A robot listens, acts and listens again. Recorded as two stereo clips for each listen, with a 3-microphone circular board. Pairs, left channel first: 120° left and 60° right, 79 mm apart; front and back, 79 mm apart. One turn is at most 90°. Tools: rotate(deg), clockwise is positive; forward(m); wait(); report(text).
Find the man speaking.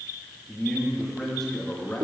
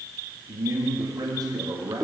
rotate(90)
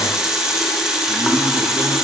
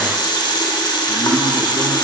rotate(70)
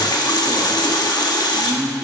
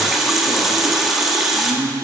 rotate(90)
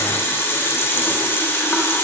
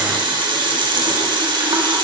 wait()
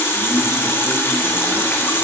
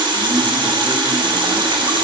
wait()
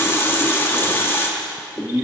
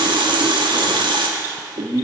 report("Found it: a man speaking, straight ahead.")